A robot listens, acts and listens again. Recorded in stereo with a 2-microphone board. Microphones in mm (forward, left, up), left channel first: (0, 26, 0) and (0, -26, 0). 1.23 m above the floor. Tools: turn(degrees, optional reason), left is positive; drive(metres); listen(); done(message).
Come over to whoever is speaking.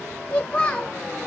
turn(degrees=20, reason="The child speaking: about 20° left or 160° left.")
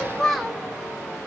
drive(metres=1.0)
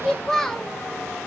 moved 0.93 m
turn(degrees=10, reason="The child speaking is now 10° left.")
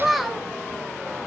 drive(metres=1.0)
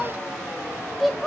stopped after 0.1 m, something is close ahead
done("Arrived at the child speaking, straight ahead.")